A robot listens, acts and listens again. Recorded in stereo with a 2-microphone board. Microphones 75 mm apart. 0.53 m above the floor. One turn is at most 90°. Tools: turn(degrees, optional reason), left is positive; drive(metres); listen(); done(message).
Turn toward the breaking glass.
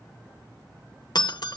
turn(degrees=70, reason="The breaking glass: about 70° left or 110° left.")
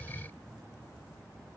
listen()
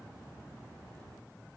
done("I heard breaking glass, but can't make it out now. It was about straight ahead or 40° left.")